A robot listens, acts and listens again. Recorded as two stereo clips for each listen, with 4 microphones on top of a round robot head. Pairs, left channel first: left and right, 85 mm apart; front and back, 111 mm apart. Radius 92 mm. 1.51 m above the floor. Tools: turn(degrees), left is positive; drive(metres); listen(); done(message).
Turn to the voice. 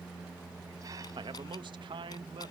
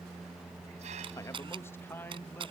turn(degrees=-75)
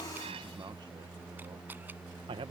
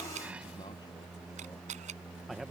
turn(degrees=-90)
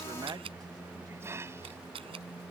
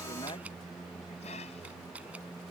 listen()
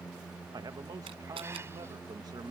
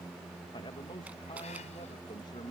turn(degrees=-55)
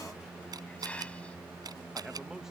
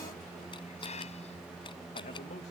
listen()
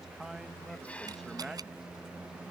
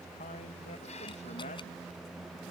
done("Found it: a man speaking, straight ahead.")